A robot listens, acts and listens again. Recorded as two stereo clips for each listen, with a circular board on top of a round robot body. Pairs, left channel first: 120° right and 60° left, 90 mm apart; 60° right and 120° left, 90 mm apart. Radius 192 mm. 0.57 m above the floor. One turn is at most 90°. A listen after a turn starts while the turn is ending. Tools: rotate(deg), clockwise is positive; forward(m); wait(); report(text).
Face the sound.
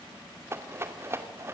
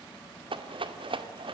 rotate(-90)
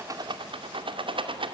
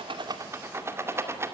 rotate(-60)
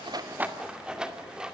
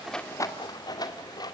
rotate(20)
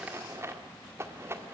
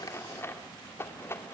report("Facing the rattle, 2 to 4 m away.")